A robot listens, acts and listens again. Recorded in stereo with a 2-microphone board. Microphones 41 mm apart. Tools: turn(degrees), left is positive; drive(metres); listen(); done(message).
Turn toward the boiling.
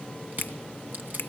listen()
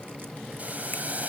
turn(degrees=-40)
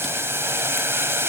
turn(degrees=-95)
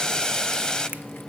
turn(degrees=20)
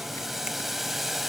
done("Found it: boiling, straight ahead, 1 to 2 m away.")